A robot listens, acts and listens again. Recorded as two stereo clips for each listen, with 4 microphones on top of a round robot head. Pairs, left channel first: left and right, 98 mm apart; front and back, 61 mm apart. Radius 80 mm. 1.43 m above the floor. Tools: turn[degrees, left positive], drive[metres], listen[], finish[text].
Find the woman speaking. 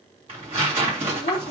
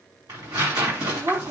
Thought: The woman speaking: 130° left.
Action: turn[130]
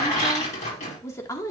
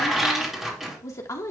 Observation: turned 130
Thought: The woman speaking is now 35° left.
Action: turn[35]
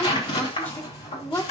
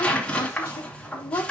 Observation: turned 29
Thought: The woman speaking is now 25° left.
Action: turn[25]
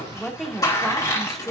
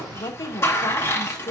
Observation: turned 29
Action: finish[Found it: a woman speaking, straight ahead.]